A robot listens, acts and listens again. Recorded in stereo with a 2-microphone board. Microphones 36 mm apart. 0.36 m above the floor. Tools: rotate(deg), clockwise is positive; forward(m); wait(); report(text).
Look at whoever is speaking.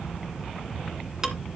wait()
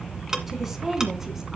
rotate(30)
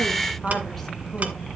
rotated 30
rotate(-10)
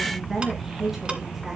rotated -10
report("Found it: a woman speaking, straight ahead.")